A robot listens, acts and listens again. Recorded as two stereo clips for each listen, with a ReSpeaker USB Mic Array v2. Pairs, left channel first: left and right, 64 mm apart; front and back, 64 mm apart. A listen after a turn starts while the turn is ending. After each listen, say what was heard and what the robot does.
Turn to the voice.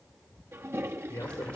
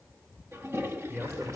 The man speaking: 120° left. Turn 120° left.
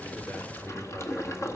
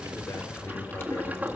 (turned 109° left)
Nothing new. It was at 10° left. Turn 10° left.
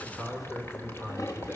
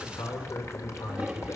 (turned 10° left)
Found it: a man speaking, straight ahead.